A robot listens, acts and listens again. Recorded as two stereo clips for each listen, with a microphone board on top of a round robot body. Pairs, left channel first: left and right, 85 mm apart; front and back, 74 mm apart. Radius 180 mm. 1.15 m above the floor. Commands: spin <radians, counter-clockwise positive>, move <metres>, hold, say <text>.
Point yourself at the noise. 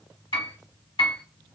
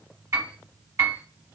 spin 2.18
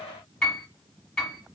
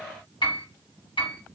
spin 0.17
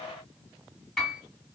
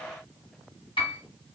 say Found it: a piano, straight ahead, 1 to 2 m away.